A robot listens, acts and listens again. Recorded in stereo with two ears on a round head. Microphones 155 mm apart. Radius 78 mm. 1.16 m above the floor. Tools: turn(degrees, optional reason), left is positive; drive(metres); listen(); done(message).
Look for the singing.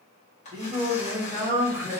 turn(degrees=-30)
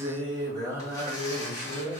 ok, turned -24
turn(degrees=-30)
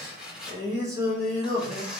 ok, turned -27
turn(degrees=-15, reason="The singing: about 15° right or 165° right.")
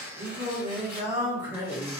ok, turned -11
turn(degrees=-20, reason="The singing: about 20° right or 160° right.")
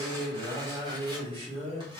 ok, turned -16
turn(degrees=-145, reason="So it is at 145° right.")
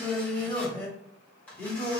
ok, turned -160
turn(degrees=15, reason="The singing is now 15° left.")
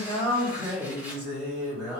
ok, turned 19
done("Found it: singing, straight ahead.")